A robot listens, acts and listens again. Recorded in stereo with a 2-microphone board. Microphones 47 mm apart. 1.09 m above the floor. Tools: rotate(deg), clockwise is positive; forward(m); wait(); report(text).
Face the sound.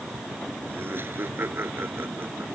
rotate(55)
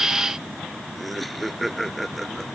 report("Facing the laughter.")